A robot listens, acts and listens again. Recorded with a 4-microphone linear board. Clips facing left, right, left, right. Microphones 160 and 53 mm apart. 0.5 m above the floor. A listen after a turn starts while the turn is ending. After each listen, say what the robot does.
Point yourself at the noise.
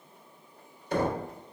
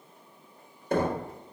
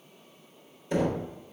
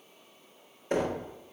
Turn 50° right.
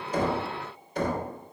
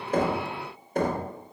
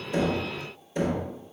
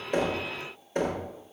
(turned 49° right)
Turn 65° right.
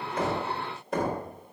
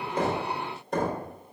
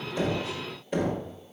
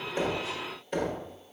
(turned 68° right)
Facing the knocking.